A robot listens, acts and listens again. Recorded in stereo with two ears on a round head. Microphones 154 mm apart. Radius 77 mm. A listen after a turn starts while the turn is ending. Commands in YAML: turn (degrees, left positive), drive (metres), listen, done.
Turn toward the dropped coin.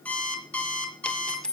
turn: 30
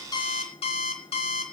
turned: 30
listen: true
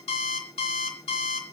done: "I heard a dropped coin, but can't make it out now. It was about 25° right or 145° left."